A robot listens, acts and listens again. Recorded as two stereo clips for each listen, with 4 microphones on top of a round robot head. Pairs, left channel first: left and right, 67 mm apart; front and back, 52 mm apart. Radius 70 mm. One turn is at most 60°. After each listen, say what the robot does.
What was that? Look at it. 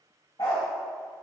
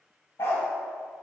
Turn 40° left.
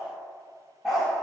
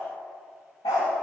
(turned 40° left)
Found it: a dog barking, straight ahead.